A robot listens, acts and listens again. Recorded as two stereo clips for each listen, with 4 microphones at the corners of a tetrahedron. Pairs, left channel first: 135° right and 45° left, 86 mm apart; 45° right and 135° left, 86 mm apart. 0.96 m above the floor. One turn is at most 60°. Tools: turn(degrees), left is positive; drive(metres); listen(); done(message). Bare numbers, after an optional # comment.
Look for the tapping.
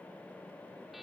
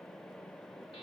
listen()
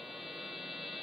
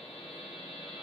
listen()
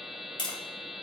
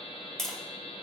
# The tapping: 130° right.
turn(-60)
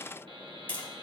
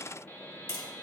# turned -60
# The tapping is now 70° right.
turn(-60)
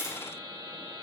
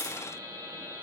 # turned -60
# Nothing new. It was at 10° right.
turn(-10)
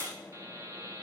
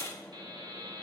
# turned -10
listen()
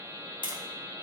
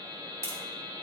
# The tapping is now 15° left.
turn(15)
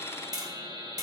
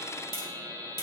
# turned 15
done("Found it: tapping, straight ahead, 2 to 4 m away.")